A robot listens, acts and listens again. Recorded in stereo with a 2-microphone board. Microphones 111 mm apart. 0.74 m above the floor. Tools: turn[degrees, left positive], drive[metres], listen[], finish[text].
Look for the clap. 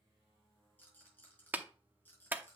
Thought: The clap: about 15° right or 165° right.
Action: turn[-15]
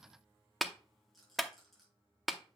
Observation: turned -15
Action: finish[Facing the clap.]